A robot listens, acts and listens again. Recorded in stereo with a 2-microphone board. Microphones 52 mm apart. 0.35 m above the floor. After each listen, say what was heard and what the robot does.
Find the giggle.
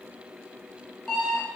Keep listening.
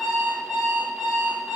Keep listening.
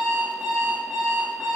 I can't make out a giggle, only an alarm clock.